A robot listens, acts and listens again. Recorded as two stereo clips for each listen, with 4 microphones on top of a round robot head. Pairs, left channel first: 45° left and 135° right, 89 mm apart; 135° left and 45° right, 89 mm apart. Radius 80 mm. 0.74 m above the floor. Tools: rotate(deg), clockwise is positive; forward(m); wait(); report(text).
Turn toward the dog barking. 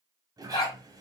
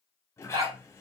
report("Found it: a dog barking, straight ahead.")